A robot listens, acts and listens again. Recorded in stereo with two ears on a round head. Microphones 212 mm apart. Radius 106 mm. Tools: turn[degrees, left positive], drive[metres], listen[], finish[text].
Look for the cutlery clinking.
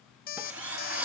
Action: turn[-30]
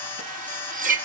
Thought: So it is at 140° right.
Action: turn[-140]
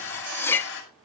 Thought: The cutlery clinking is now 10° left.
Action: turn[10]
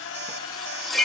Action: finish[Found it: cutlery clinking, straight ahead, under 1 m away.]